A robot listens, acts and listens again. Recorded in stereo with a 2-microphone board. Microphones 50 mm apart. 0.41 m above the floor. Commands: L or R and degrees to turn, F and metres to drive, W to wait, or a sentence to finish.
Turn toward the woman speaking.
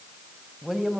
R30
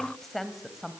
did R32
R30
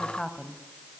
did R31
Found it: a woman speaking, straight ahead.